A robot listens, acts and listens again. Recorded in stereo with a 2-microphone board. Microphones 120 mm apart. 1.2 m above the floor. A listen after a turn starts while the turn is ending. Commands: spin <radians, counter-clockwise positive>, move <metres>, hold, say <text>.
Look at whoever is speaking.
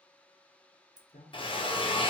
spin 1.13
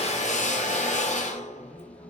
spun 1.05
hold
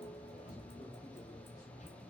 hold
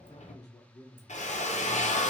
spin 0.61
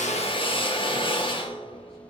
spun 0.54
hold
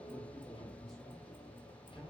hold
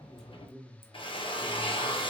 say Facing the man speaking, 1 to 2 m away.